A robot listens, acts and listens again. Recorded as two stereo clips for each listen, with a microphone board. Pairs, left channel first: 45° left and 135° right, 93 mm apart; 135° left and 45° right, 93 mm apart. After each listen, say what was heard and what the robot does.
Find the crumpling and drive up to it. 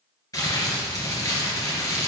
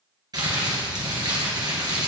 Drive 1.0 m forward.
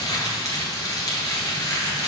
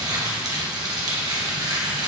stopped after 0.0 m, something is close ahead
Something is in my way. I am facing the crumpling but have not reached it.